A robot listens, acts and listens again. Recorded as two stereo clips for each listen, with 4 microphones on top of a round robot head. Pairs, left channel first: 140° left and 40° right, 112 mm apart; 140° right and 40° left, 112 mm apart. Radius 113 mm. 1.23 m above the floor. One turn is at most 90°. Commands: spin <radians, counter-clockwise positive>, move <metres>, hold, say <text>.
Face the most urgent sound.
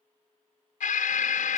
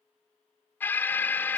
spin 1.57
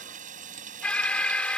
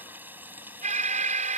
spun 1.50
spin 1.05
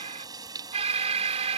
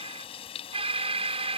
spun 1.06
say Found it: an alarm, straight ahead.